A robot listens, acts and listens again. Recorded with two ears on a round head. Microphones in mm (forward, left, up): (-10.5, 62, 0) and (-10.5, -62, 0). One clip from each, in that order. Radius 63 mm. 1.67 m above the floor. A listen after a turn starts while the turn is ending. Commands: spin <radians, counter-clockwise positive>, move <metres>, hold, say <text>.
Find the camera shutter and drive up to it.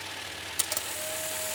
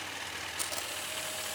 spin 0.87
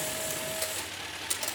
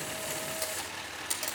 move 1.0
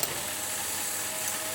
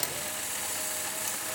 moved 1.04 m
move 1.0
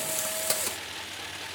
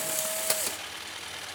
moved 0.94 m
move 1.0
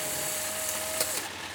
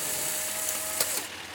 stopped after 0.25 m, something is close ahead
spin -0.26
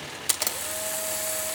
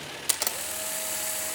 say Arrived at the camera shutter, straight ahead.